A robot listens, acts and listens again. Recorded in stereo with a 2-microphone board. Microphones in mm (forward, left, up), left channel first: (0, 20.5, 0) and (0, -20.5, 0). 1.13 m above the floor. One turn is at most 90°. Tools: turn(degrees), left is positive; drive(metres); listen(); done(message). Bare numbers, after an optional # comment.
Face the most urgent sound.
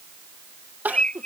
# The crying: about 45° right or 135° right.
turn(-45)
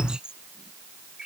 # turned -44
listen()
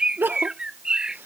# So it is at 80° right.
turn(-80)
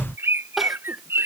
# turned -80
done("Facing the crying.")